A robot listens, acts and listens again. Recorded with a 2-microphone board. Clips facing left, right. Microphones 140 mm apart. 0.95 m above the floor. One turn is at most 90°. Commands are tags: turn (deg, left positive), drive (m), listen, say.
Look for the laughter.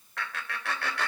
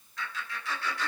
<turn deg="70"/>
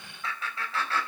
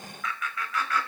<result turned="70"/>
<turn deg="30"/>
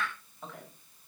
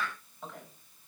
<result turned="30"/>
<say>Found it: laughter, straight ahead.</say>